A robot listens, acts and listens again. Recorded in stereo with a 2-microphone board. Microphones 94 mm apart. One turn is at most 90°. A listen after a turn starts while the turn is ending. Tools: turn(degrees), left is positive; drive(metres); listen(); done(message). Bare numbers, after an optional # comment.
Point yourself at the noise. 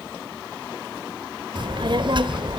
# The child speaking: about 55° right or 125° right.
turn(-55)
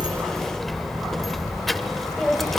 done("Found it: a child speaking, straight ahead, 1 to 2 m away.")